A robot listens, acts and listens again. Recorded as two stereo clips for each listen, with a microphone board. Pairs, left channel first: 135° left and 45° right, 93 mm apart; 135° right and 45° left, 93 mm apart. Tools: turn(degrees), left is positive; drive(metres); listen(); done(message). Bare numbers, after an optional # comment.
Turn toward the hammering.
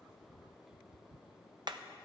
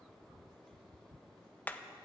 # The hammering: 65° right.
turn(-65)
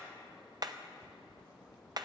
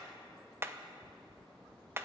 # The hammering is now 15° right.
turn(-15)
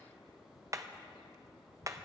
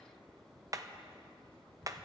done("Facing the hammering.")